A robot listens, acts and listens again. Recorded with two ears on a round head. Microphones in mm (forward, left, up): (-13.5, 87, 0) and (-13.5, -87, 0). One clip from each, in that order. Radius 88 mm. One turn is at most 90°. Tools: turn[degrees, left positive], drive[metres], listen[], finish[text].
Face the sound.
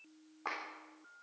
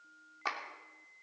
Action: turn[-90]
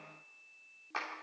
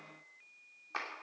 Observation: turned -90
Action: finish[Found it: a clap, straight ahead.]